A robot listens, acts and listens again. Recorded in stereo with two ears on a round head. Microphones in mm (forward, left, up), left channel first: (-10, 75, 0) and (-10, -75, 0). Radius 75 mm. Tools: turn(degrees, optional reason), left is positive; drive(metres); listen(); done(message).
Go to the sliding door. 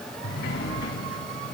turn(degrees=65, reason="The sliding door: about 65° left or 115° left.")
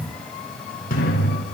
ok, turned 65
turn(degrees=50, reason="So it is at 50° left.")
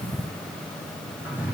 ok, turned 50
turn(degrees=-10, reason="The sliding door is now 10° right.")
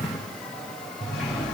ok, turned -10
drive(metres=1.0)
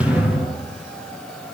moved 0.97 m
drive(metres=1.0)
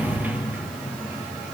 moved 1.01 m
turn(degrees=-10, reason="The sliding door is now 10° right.")
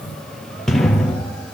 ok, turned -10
drive(metres=1.0)
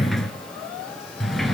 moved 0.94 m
drive(metres=1.0)
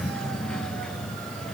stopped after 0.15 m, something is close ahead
done("I am next to the sliding door.")